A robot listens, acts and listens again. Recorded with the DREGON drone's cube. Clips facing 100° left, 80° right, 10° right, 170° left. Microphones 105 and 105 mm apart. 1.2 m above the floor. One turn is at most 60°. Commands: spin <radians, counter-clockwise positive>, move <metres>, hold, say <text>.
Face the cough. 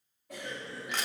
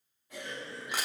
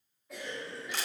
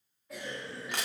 spin 1.05
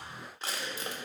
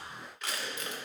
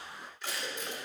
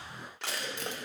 spin 0.61
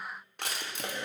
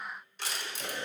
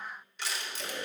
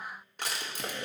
spin 0.17
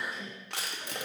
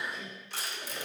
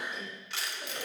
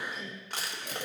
say Facing the cough, 2 to 4 m away.